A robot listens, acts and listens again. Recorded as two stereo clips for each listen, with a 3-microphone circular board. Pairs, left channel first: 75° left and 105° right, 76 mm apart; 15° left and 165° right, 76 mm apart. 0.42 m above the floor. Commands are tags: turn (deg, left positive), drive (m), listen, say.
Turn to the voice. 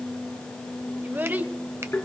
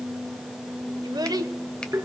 <turn deg="-165"/>
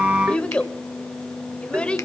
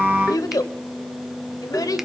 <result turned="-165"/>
<say>Facing the child speaking, 1 to 2 m away.</say>